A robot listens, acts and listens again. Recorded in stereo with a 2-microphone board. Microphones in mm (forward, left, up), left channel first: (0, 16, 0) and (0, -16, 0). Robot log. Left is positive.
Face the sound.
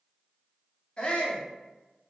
note: The shout: about 30° left or 150° left.
cmd yaw +30
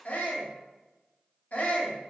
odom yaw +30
note: So it is at 115° left.
cmd yaw +115
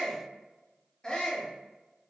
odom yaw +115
note: The shout is now 25° left.
cmd yaw +25
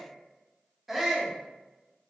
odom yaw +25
end: Facing the shout.